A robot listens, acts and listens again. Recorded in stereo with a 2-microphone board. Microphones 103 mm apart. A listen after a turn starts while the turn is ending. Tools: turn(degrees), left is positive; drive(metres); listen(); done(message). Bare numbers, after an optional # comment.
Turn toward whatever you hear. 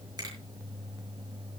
# The finger snap: about 40° right or 140° right.
turn(-40)
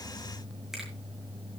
listen()
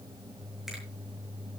listen()
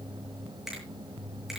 done("Facing the finger snap.")